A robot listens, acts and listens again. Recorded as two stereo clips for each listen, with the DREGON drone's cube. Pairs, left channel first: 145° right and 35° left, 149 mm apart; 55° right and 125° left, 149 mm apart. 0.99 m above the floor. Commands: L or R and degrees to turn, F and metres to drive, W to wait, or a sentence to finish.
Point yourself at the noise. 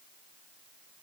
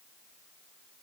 W
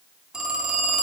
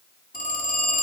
R50
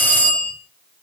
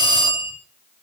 Facing the phone ringing.